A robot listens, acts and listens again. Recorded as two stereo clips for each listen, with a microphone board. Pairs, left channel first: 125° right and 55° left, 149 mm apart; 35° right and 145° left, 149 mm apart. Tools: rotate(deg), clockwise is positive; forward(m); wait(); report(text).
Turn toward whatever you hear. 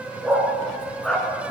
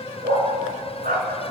rotate(-150)
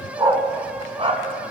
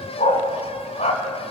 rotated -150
rotate(-10)
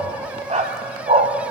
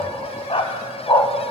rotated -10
rotate(-30)
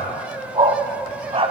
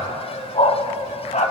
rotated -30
report("Facing the dog barking, 1 to 2 m away.")